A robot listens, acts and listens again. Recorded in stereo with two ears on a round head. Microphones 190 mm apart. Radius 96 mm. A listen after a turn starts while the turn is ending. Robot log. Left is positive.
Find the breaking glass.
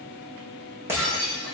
cmd yaw -30
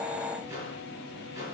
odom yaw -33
cmd idle
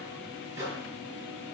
end: I heard breaking glass, but can't make it out now. It was about 20° left or 135° right.